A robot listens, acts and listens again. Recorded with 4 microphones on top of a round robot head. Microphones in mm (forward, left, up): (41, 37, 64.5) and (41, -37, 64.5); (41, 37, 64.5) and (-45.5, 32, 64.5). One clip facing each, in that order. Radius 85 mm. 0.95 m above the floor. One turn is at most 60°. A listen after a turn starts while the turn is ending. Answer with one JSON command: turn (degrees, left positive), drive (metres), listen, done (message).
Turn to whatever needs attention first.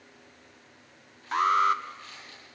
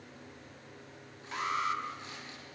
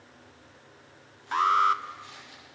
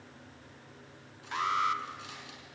{"turn": 50}
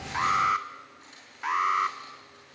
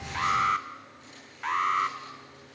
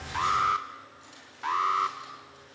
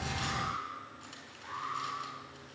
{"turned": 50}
{"done": "Found it: an alarm, straight ahead."}